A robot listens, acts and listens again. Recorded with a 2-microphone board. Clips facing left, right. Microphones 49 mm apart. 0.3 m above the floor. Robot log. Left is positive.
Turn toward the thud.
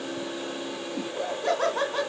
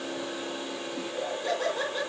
cmd idle
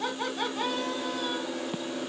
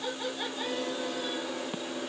cmd idle
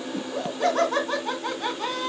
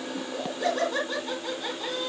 end: I can't make out a thud to turn to.